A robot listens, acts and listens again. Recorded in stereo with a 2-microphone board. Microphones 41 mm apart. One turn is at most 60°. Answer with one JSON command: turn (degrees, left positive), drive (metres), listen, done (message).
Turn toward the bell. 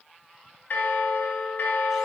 {"turn": 50}
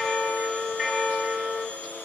{"done": "Facing the bell."}